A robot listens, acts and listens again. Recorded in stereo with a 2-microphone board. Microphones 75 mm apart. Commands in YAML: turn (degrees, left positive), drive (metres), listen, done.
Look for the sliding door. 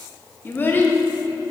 listen: true
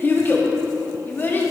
listen: true
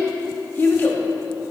done: "I can't make out a sliding door to turn to."